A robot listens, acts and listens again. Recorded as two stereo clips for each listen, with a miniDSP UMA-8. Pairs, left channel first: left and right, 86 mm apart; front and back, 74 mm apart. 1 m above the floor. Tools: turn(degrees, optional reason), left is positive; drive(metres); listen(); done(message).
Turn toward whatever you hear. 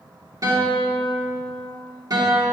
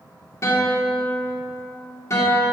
turn(degrees=-50, reason="The guitar: 50° right.")
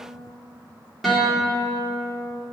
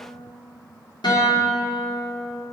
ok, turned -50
done("Found it: a guitar, straight ahead.")